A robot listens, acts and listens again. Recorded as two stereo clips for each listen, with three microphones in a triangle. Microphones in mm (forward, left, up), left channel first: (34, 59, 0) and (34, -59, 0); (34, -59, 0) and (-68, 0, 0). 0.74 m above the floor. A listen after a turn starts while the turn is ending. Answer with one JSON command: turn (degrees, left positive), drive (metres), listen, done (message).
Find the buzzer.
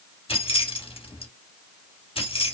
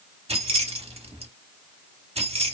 {"listen": true}
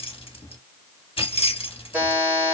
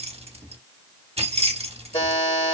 {"turn": -15}
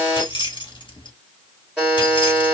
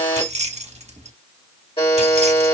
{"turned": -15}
{"done": "Found it: a buzzer, straight ahead."}